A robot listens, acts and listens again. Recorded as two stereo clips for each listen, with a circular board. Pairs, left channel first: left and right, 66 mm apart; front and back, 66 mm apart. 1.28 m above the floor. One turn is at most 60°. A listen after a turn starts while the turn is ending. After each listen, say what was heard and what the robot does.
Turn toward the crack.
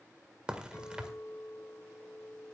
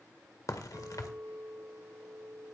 The crack: 15° right. Turn 15° right.
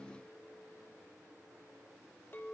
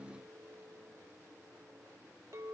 I heard a crack from this way, but can't make it out now.